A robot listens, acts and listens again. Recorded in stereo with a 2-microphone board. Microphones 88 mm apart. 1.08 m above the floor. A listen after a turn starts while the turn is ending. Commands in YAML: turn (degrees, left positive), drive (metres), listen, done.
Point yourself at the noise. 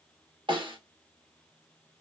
turn: -65
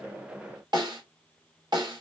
turn: -55
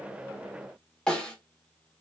done: "Facing the snare drum."